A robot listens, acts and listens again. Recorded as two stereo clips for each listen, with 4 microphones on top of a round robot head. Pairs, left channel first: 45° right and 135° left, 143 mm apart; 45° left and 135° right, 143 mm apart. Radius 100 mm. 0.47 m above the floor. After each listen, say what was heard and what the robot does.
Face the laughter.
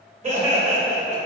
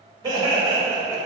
The laughter: 160° left. Turn 160° left.
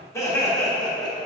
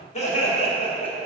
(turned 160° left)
Facing the laughter.